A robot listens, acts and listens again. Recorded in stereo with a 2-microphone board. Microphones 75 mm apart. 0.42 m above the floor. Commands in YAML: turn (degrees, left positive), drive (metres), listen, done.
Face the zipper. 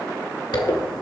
turn: 90
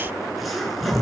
done: "Found it: a zipper, straight ahead, 1 to 2 m away."